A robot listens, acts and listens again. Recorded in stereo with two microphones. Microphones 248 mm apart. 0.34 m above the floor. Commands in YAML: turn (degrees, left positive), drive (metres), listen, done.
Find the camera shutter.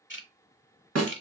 listen: true
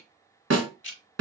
listen: true
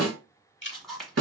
turn: 30
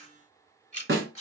turn: 150
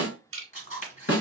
turn: 30
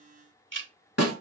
listen: true
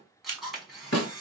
done: "Facing the camera shutter."